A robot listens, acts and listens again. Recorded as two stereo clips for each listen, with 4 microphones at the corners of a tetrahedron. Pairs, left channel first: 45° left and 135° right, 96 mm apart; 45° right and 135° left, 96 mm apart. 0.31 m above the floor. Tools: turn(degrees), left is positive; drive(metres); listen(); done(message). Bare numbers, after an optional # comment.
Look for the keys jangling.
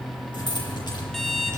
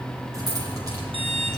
# The keys jangling: 90° left.
turn(90)
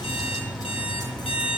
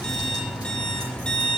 listen()
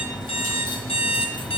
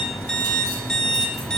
listen()
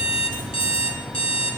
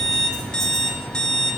done("Facing where the keys jangling came from. I can't hear it now.")